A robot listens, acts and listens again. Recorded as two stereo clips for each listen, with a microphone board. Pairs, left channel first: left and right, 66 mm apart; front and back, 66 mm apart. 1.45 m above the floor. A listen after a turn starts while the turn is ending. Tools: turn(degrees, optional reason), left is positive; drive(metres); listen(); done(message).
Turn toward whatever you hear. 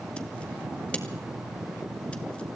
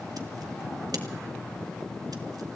listen()
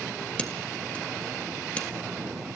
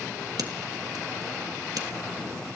turn(degrees=165, reason="The scissors: 165° left.")
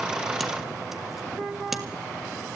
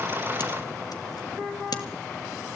done("Facing the scissors.")